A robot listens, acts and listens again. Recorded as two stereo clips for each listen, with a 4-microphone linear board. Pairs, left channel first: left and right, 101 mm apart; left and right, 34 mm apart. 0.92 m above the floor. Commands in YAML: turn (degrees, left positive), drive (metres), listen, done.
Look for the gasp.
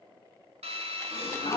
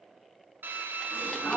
turn: 90
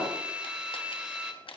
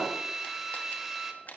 done: "Facing where the gasp came from. I can't hear it now."